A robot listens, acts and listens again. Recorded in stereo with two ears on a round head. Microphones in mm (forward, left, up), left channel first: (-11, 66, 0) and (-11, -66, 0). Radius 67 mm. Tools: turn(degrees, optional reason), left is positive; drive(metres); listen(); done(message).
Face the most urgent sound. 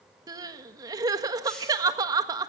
turn(degrees=-25, reason="The crying: about 25° right or 155° right.")
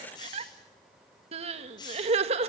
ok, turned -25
turn(degrees=-125, reason="So it is at 125° right.")
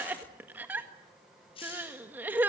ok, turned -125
turn(degrees=-15, reason="The crying is now 15° right.")
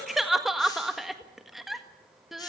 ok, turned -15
done("Facing the crying.")